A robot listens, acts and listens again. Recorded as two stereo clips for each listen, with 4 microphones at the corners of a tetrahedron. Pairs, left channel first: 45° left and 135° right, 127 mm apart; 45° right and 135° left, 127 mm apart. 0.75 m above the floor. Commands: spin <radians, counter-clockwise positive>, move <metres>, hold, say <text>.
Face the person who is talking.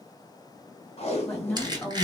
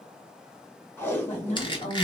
spin -0.52
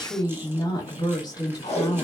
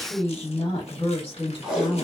spin -0.17
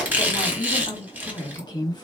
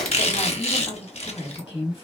say Facing the woman speaking, 1 to 2 m away.